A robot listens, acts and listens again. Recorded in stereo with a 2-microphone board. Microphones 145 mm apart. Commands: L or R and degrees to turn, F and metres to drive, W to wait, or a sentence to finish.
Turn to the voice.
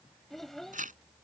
L30
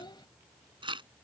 L145
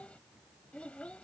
L10
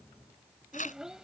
Found it: a child speaking, straight ahead.